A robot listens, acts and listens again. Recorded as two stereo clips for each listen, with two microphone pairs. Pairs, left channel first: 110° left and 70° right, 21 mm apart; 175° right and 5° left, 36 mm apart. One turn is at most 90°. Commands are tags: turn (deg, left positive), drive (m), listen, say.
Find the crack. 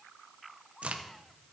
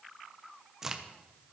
<turn deg="-70"/>
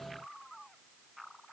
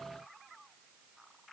<say>I heard a crack from this way, but can't make it out now.</say>